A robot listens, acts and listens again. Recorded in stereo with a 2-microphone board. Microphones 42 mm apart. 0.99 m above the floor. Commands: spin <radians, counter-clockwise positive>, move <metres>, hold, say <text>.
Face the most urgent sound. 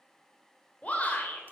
spin 0.52
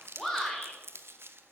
say Facing the shout, 2 to 4 m away.